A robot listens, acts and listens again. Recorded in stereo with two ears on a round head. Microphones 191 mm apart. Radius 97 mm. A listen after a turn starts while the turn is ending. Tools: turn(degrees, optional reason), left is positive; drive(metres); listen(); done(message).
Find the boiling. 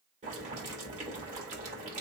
turn(degrees=-35, reason="The boiling: about 35° right or 145° right.")
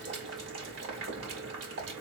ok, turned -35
turn(degrees=-105, reason="So it is at 105° right.")
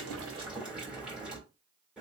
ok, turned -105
done("Facing the boiling, 2 to 4 m away.")